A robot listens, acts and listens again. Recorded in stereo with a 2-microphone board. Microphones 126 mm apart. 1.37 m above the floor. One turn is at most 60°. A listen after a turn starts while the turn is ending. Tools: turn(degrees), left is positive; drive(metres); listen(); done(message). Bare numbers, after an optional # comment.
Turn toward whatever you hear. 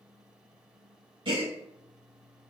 # The gasp: about 40° right or 140° right.
turn(-40)
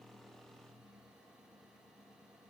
listen()
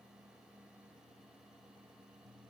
done("I heard a gasp, but can't make it out now. It was about straight ahead or 100° right.")